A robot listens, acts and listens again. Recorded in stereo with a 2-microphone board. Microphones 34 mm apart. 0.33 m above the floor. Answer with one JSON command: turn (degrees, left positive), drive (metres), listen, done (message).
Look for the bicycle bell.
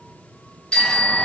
{"turn": 30}
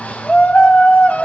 {"listen": true}
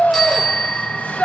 {"done": "Facing the bicycle bell."}